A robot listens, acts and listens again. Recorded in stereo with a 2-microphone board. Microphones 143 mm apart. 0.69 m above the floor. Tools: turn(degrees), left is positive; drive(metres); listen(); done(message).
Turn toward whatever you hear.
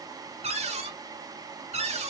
turn(degrees=-45)
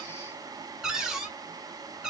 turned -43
done("Found it: a cupboard door, straight ahead, 1 to 2 m away.")